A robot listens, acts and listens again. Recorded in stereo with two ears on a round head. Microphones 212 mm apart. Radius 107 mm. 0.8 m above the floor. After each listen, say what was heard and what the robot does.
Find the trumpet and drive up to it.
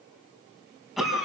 Keep listening.
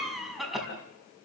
Keep listening.
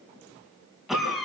I can't make out a trumpet to turn to.